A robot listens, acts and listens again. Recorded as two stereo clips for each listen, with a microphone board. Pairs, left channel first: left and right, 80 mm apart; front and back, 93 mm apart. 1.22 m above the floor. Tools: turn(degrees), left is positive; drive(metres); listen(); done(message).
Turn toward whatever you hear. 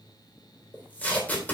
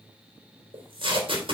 turn(degrees=160)
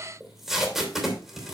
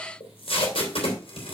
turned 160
done("Facing the tape being pulled.")